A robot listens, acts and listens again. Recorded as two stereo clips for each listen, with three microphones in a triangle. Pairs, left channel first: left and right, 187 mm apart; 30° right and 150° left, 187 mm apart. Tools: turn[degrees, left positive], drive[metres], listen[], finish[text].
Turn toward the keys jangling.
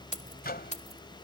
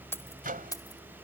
Thought: The keys jangling: 40° left.
Action: turn[40]
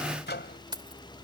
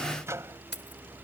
Thought: The keys jangling is now 25° right.
Action: turn[-25]
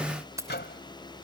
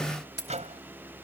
Thought: The keys jangling is now 15° right.
Action: turn[-15]
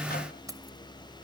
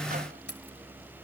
Thought: The keys jangling is now 20° right.
Action: turn[-20]
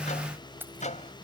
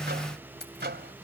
Thought: The keys jangling is now 10° right.
Action: turn[-10]
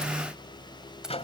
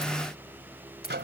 Action: listen[]
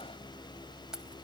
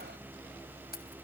Action: finish[Facing the keys jangling.]